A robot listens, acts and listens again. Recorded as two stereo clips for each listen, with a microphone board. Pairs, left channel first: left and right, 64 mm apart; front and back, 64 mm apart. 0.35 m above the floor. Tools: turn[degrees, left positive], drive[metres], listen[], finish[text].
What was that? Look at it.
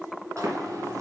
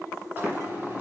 Thought: The running tap: 120° right.
Action: turn[-120]
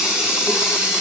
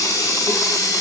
Thought: The running tap is now 10° right.
Action: turn[-10]
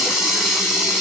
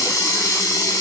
Action: finish[Found it: a running tap, straight ahead.]